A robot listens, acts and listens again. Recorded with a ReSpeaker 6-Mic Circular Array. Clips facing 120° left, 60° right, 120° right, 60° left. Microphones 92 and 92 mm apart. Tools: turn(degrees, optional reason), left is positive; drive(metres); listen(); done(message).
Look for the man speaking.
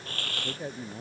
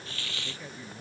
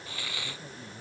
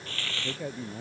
turn(degrees=75, reason="The man speaking: 75° left.")
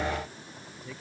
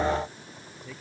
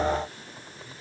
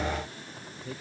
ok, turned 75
turn(degrees=35, reason="The man speaking is now 35° left.")
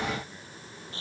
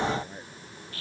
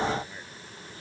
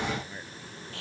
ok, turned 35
listen()
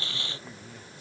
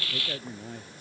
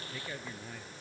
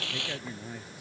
turn(degrees=-20, reason="The man speaking is now 20° right.")
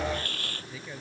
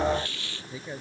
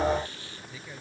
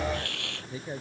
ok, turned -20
done("Found it: a man speaking, straight ahead.")